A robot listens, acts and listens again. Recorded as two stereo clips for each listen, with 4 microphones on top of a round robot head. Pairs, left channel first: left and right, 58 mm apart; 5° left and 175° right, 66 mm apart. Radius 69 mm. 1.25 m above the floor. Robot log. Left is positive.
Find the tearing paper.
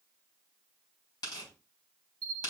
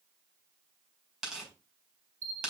note: The tearing paper: 105° left.
cmd yaw +105
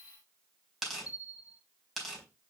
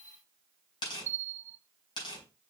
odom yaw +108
end: Found it: tearing paper, straight ahead, over 4 m away.